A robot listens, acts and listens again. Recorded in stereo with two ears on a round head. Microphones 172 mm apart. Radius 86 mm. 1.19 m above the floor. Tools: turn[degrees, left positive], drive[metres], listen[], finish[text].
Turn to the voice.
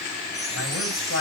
Thought: The man speaking: about 70° left or 110° left.
Action: turn[70]
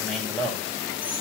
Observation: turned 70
Action: finish[Found it: a man speaking, straight ahead.]